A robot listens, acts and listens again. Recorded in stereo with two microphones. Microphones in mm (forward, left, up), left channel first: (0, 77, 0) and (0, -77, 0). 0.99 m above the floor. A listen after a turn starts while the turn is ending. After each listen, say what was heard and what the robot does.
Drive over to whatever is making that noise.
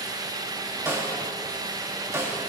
The snare drum: about 15° right or 165° right. Turn 15° right.
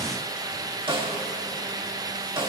So it is at 145° right. Turn 145° right.
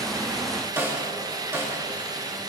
The snare drum is now 15° right. Turn 15° right.
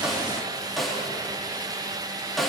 Drive 1.0 m forward.
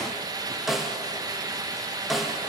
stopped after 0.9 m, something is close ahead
I am next to the snare drum.